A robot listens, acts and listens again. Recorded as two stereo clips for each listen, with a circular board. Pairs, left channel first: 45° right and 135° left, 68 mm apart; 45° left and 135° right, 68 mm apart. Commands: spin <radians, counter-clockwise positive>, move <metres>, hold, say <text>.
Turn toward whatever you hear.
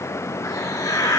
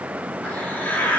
spin -0.35
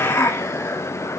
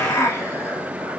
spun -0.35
say Facing the hiss.